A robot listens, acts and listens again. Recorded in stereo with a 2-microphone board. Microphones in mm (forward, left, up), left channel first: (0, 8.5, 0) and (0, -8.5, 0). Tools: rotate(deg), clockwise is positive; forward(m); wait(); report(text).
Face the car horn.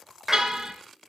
rotate(40)
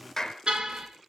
rotate(100)
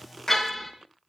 report("Facing the car horn.")